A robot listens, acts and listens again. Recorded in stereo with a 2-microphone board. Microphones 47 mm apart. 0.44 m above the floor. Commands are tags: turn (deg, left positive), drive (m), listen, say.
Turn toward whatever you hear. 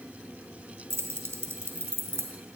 <turn deg="-70"/>
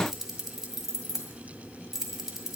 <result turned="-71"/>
<turn deg="-10"/>
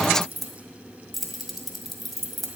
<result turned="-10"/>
<say>Found it: keys jangling, straight ahead, 1 to 2 m away.</say>